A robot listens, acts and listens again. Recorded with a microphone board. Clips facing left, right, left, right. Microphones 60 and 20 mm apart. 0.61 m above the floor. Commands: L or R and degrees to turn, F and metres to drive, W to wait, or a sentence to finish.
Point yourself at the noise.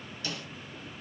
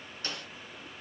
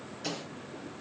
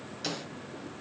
R40
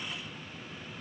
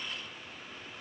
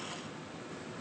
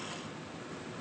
W
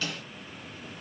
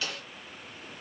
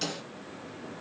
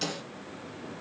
Found it: a snare drum, straight ahead, 2 to 4 m away.